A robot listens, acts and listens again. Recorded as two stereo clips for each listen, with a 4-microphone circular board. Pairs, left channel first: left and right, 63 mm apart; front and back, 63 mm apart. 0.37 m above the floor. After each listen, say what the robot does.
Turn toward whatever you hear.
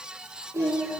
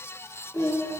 Turn 50° right.
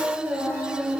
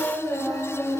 Turn 35° right.
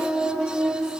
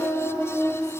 Turn 10° right.
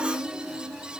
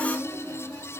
Found it: singing, straight ahead, 2 to 4 m away.